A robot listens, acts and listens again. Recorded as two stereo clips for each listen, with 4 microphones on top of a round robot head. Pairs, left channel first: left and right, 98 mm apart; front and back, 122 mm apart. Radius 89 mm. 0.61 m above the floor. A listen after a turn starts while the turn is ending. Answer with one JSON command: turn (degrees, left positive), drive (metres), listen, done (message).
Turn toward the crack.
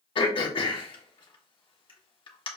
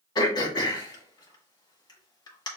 {"listen": true}
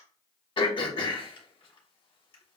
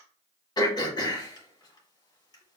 {"listen": true}
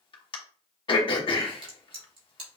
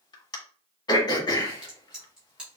{"turn": -95}
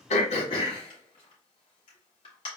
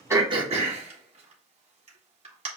{"done": "Facing where the crack came from. I can't hear it now."}